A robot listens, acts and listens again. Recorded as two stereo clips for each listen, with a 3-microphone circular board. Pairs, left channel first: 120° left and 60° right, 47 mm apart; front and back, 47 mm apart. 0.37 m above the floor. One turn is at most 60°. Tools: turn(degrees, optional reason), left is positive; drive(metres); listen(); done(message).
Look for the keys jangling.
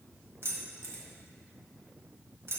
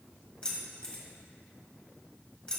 turn(degrees=-60, reason="The keys jangling: 65° right.")
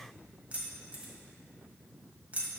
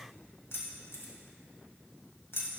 done("Facing the keys jangling.")